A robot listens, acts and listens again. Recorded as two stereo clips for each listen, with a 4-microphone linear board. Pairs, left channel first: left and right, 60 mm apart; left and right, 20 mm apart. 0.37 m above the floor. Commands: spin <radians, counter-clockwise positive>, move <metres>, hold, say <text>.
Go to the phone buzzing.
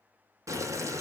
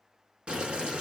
hold
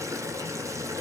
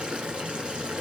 hold
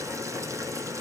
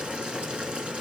say I can't make out a phone buzzing to turn to.